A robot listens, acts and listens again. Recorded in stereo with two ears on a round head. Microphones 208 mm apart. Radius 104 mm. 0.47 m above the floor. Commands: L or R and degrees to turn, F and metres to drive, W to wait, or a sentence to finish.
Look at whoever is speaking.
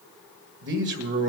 R50
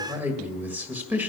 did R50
R10
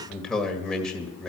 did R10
Found it: a man speaking, straight ahead.